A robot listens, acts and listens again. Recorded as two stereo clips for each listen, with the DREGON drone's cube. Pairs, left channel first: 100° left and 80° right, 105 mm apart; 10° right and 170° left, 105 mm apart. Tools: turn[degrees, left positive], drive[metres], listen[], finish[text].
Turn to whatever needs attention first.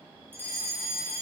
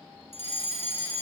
Thought: The fire alarm: 10° right.
Action: turn[-10]
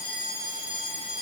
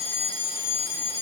Action: finish[Found it: a fire alarm, straight ahead.]